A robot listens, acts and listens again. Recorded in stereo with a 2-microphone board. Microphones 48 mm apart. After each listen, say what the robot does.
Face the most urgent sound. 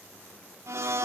Keep listening.
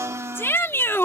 Turn 60° left.
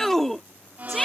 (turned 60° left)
Turn 10° left.
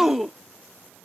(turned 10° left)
Facing the shout.